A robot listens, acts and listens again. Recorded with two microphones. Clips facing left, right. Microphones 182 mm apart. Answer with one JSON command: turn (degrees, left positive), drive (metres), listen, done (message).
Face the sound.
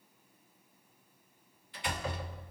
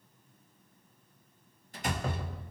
{"turn": -45}
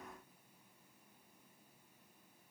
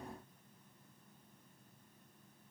{"listen": true}
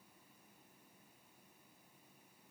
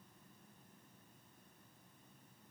{"done": "I heard a door slam, but can't make it out now. It was about straight ahead or 90° right."}